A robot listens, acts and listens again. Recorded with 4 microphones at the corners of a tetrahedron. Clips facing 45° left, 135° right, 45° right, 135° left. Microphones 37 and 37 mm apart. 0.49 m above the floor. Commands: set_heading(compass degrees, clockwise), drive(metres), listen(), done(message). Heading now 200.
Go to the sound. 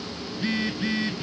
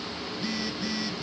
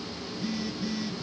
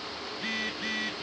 set_heading(100)
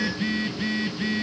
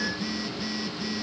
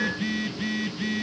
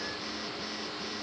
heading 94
set_heading(104)
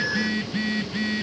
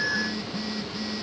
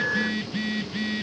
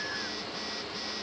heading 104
drive(1.0)
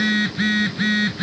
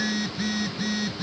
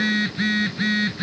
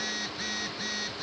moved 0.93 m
drive(1.0)
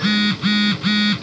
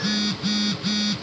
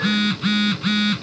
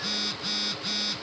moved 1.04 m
drive(1.0)
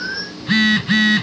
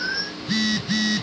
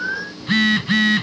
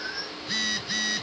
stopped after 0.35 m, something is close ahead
done("I am next to the phone buzzing.")